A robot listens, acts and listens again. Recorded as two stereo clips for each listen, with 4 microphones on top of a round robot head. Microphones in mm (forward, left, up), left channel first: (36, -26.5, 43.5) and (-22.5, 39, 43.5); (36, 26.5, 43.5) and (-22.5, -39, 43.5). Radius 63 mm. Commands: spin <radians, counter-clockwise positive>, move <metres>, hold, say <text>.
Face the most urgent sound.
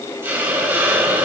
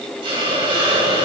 hold
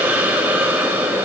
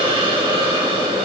hold
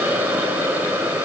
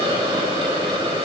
say I can't make out anything urgent, only a hiss.